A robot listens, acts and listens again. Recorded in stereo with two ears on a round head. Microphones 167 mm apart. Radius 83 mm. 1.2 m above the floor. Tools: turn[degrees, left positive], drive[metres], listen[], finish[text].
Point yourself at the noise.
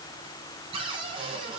Thought: The cupboard door: about 30° right or 150° right.
Action: turn[-30]
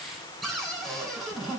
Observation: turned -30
Action: finish[Found it: a cupboard door, straight ahead, 2 to 4 m away.]